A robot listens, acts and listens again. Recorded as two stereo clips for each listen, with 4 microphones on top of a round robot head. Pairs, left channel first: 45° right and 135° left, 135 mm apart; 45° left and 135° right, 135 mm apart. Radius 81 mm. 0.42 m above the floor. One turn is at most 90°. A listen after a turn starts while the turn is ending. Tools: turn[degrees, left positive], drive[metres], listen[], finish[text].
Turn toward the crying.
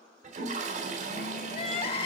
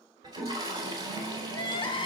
Action: finish[Facing the crying, 1 to 2 m away.]